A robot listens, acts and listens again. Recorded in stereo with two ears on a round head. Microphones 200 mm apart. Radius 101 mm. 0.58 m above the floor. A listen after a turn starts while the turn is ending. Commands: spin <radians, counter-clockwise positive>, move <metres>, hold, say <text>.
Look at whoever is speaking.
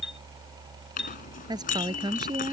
spin -0.35
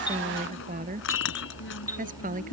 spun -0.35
spin -2.44
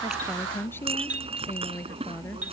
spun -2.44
spin 0.17
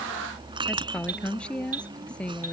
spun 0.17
say Found it: a woman speaking, straight ahead.